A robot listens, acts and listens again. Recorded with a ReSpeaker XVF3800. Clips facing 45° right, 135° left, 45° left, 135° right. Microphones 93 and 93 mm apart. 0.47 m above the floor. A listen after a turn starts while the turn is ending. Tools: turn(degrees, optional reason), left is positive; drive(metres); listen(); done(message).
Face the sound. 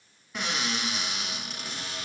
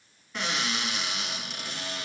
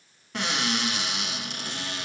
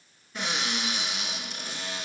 turn(degrees=40, reason="The cupboard door: 40° left.")
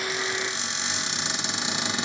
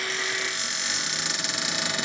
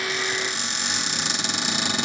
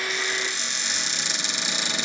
turn(degrees=15, reason="The cupboard door is now 15° left.")
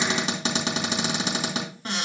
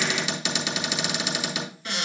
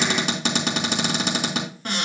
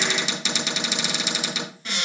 done("Facing the cupboard door, 2 to 4 m away.")